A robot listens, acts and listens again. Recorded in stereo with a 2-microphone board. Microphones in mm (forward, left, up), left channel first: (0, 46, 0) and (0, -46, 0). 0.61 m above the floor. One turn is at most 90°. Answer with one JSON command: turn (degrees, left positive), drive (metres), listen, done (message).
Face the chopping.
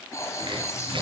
{"turn": -65}
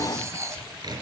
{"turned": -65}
{"turn": -50}
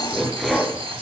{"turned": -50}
{"done": "Found it: chopping, straight ahead, over 4 m away."}